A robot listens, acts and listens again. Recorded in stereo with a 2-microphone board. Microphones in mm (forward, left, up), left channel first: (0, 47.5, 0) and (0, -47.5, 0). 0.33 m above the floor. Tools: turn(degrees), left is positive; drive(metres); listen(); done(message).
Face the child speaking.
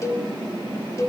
listen()
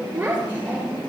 turn(degrees=-20)
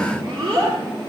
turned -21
turn(degrees=-135)
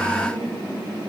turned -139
listen()
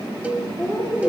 done("Found it: a child speaking, straight ahead.")